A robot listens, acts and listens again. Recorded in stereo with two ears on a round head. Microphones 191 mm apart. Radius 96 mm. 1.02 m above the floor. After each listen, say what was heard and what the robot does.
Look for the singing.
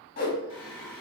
The singing: about 65° left or 115° left. Turn 65° left.
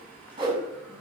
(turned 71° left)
So it is at 10° left. Turn 10° left.
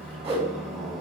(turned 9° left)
Found it: singing, straight ahead, 1 to 2 m away.